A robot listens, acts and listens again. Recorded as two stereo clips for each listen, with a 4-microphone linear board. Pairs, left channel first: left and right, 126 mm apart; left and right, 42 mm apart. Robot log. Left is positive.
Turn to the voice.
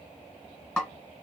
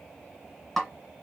cmd idle
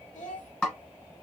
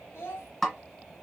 note: The child speaking: about 75° left or 105° left.
cmd yaw +75
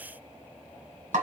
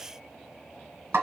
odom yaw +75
cmd idle
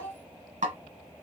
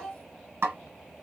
note: So it is at 15° left.
cmd yaw +15
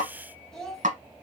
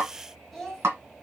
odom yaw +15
end: Found it: a child speaking, straight ahead, 1 to 2 m away.